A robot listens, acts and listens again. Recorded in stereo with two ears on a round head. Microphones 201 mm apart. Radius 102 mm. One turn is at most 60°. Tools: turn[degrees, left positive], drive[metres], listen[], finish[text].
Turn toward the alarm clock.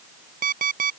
Thought: The alarm clock: about 40° right or 140° right.
Action: turn[-40]
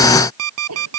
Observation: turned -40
Thought: So it is at 100° right.
Action: turn[-60]
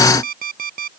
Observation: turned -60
Thought: The alarm clock is now 40° right.
Action: turn[-40]
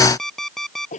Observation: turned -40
Action: finish[Facing the alarm clock.]